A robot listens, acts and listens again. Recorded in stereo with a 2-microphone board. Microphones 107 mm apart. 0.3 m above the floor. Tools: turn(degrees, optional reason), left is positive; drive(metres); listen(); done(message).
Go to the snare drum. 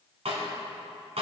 turn(degrees=-70, reason="The snare drum: about 70° right or 110° right.")
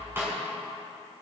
turn(degrees=-25, reason="So it is at 25° right.")
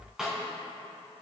drive(metres=1.0)
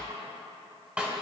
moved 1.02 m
turn(degrees=-15, reason="The snare drum is now 15° right.")
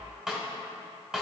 turn(degrees=-10, reason="The snare drum is now 10° right.")
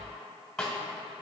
drive(metres=1.0)
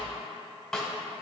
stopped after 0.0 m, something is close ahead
done("Arrived at the snare drum, straight ahead.")